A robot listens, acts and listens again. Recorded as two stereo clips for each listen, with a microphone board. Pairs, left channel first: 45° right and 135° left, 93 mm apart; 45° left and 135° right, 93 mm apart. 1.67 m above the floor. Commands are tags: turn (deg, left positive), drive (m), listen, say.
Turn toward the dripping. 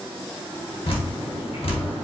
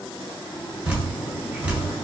<turn deg="-60"/>
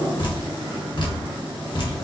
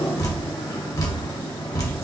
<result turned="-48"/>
<say>Facing the dripping.</say>